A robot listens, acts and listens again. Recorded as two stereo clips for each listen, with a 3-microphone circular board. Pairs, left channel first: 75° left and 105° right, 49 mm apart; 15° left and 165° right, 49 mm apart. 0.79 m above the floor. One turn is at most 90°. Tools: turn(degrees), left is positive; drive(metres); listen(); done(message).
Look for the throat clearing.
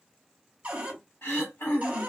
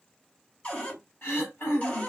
turn(degrees=60)
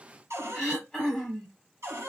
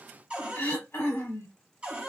done("Facing the throat clearing.")